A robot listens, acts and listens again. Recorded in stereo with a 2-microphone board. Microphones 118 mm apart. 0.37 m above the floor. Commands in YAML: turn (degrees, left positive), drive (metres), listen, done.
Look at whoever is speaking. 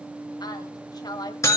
turn: 35
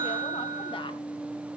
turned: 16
listen: true
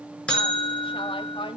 turn: 135
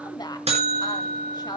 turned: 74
turn: 45
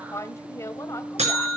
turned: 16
turn: 30
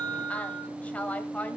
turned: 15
turn: 15
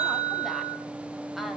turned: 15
listen: true
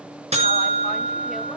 listen: true
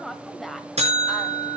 done: "Found it: a woman speaking, straight ahead, 1 to 2 m away."